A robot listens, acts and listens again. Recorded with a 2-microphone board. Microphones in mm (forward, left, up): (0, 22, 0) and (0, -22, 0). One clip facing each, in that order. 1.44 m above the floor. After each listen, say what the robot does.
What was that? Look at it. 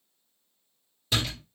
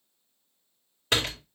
Turn 60° right.
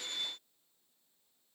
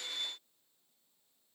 Keep listening.
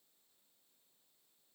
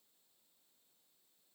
I heard a door slam, but can't make it out now. It was about straight ahead or 60° right.